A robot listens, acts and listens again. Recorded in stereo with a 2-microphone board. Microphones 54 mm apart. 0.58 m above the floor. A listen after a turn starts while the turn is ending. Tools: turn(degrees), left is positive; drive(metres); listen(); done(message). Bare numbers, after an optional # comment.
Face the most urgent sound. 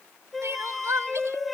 # The crying: about 65° right or 115° right.
turn(-65)
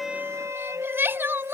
# So it is at 45° right.
turn(-45)
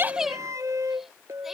done("Facing the crying.")